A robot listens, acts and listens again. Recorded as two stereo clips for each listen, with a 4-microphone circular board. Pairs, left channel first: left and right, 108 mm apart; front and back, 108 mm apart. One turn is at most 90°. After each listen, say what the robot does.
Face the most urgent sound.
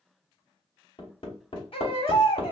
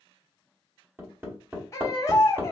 Turn 60° left.
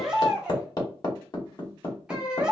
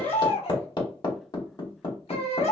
Turn 10° right.
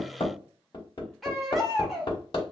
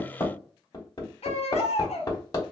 Facing the baby crying.